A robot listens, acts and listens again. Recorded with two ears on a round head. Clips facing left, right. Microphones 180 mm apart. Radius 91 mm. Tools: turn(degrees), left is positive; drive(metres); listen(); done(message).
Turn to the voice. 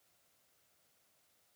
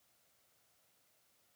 listen()
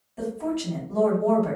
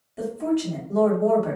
turn(degrees=-30)
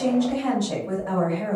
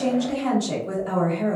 turn(degrees=-135)
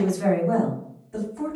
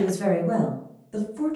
turn(degrees=-40)
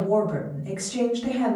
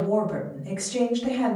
done("Found it: a woman speaking, straight ahead.")